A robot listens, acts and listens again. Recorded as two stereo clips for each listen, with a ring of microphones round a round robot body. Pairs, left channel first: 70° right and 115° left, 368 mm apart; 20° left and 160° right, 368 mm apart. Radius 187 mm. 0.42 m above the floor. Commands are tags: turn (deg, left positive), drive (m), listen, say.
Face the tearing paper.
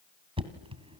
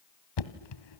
<listen/>
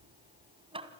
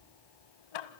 <listen/>
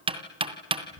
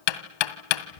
<say>I can't make out tearing paper to turn to.</say>